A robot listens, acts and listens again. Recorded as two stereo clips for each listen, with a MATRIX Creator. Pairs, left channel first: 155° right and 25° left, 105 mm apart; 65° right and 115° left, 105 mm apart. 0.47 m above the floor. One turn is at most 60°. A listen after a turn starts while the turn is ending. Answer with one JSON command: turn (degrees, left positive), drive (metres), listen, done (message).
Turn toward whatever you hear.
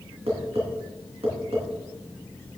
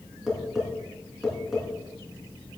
{"turn": 25}
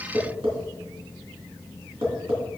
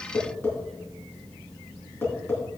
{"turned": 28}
{"done": "Found it: tapping, straight ahead, 2 to 4 m away."}